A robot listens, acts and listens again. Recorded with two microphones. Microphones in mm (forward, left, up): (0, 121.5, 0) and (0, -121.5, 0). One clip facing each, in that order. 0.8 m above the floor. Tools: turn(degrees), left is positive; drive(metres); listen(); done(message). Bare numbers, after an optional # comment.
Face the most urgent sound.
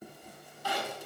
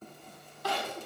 # The crying: about 70° right or 110° right.
turn(-70)
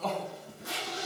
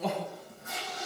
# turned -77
# So it is at 10° right.
turn(-10)
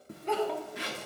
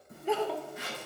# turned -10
done("Facing the crying, 1 to 2 m away.")